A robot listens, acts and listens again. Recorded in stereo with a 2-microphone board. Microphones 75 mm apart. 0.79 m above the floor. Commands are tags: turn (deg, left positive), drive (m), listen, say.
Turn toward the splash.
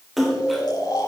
<turn deg="30"/>
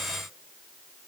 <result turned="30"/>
<listen/>
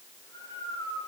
<say>I heard a splash, but can't make it out now. It was about 30° right or 150° left.</say>